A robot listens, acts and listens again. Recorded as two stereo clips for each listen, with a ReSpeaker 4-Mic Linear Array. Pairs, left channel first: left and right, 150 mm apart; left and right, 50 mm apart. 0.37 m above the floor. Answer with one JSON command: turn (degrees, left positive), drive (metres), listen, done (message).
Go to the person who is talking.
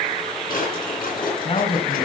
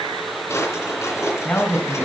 {"turn": 45}
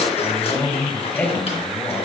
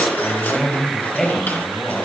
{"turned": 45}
{"turn": 15}
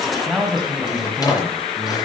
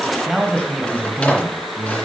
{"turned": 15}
{"drive": 1.0}
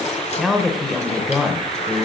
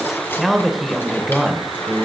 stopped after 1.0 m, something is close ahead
{"done": "Arrived at the man speaking, straight ahead."}